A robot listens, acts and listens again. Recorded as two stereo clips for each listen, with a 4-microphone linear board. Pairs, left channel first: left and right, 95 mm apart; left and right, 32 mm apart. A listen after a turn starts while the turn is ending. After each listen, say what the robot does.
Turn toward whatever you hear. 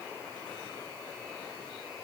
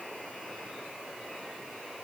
Keep listening.
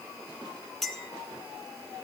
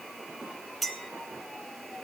Turn 30° left.
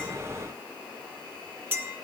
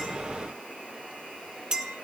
Turn 25° right.
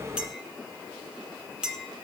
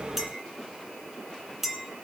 Turn 10° right.
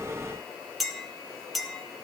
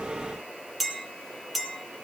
Found it: a clink, straight ahead, 1 to 2 m away.